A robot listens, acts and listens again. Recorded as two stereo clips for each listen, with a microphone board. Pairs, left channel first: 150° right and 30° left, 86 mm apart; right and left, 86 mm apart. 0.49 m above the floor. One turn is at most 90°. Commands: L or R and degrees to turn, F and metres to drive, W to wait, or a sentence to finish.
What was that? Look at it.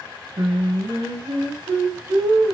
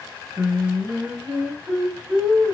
L10
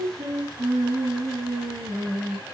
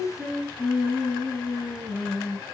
Found it: singing, straight ahead.